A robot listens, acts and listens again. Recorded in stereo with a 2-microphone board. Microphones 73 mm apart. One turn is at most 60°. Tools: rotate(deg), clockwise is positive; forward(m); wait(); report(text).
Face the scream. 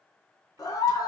rotate(-55)
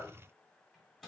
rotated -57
wait()
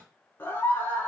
rotate(-35)
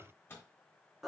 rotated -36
report("Facing the scream, 1 to 2 m away.")